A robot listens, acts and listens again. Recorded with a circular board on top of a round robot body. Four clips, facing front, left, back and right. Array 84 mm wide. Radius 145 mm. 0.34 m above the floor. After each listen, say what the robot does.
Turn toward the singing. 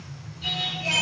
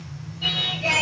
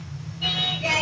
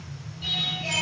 Turn 145° left.
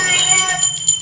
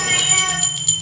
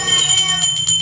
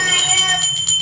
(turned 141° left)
Keep listening.
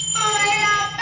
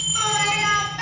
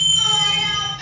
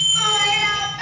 Turn 15° left.
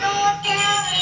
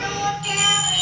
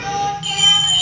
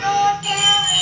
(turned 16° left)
Found it: singing, straight ahead.